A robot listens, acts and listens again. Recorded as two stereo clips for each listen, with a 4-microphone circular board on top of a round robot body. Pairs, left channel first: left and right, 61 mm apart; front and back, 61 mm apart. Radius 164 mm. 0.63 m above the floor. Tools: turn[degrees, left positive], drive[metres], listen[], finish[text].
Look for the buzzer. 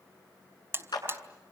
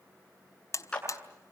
Thought: The buzzer: 40° right.
Action: turn[-40]
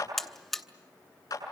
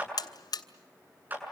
Action: finish[Found it: a buzzer, straight ahead.]